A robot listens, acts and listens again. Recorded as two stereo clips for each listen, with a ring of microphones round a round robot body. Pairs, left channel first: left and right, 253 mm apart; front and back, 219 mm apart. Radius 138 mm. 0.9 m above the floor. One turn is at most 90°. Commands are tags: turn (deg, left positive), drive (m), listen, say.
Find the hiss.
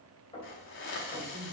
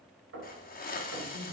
<turn deg="50"/>
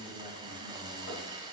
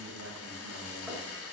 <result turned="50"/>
<turn deg="-15"/>
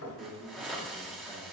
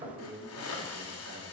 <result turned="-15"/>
<say>Found it: a hiss, straight ahead.</say>